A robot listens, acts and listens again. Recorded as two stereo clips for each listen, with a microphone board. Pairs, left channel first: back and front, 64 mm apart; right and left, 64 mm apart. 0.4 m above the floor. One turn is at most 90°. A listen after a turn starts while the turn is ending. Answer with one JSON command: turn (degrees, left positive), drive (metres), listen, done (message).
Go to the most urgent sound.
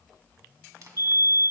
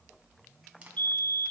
{"turn": -30}
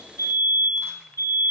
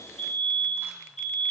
{"drive": 1.0}
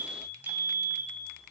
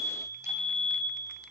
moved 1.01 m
{"turn": -15}
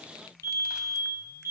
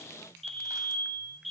{"drive": 1.0}
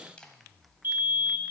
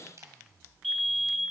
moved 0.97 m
{"drive": 1.0}
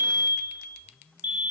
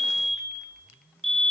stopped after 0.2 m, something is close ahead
{"done": "Arrived at the fire alarm, straight ahead."}